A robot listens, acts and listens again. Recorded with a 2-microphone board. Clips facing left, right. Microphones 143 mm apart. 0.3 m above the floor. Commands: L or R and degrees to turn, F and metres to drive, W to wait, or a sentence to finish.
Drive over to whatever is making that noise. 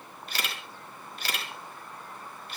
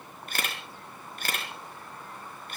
R50
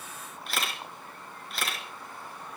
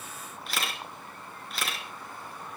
F1.0
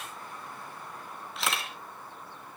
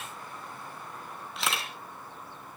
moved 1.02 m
F1.0
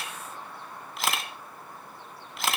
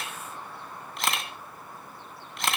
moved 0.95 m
F1.0
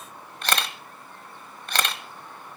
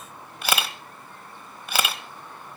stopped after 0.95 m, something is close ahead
R10
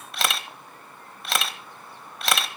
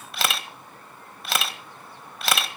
I am next to the camera shutter.